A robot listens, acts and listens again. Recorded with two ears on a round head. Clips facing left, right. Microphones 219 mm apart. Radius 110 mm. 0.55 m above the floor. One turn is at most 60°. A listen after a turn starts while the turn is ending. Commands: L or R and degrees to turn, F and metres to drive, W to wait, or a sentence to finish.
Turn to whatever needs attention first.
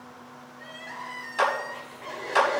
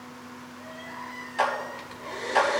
L45
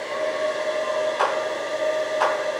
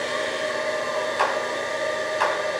W
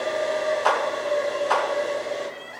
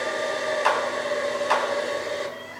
Found it: crying, straight ahead.